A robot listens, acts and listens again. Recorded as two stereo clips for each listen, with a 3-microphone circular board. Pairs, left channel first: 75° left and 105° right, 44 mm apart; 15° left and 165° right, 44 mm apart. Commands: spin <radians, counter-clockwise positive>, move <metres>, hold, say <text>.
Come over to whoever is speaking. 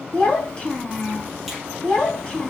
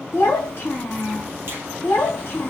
move 1.0
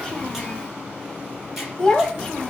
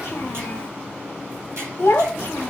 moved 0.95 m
spin -0.26
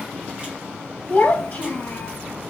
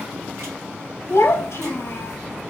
move 1.0
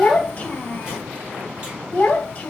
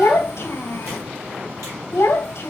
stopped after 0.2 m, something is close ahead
say Arrived at the child speaking, straight ahead.